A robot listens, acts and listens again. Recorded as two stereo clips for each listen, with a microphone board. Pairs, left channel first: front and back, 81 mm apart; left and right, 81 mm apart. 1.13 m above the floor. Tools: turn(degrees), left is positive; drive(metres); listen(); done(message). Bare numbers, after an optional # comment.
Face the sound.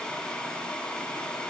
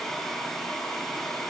listen()
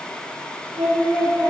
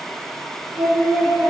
# The singing: 175° right.
turn(-175)
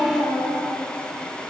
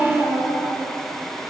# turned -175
# The singing is now 25° right.
turn(-25)
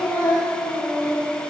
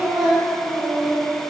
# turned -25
done("Facing the singing, over 4 m away.")